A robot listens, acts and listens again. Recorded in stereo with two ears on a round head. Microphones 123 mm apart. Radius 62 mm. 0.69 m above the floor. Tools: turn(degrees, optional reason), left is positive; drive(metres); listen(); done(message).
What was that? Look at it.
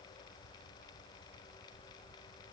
listen()
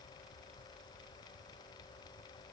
listen()
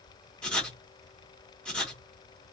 turn(degrees=30)
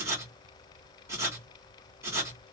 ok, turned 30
turn(degrees=-20, reason="So it is at 20° right.")
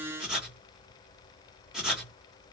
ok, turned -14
done("Facing the writing.")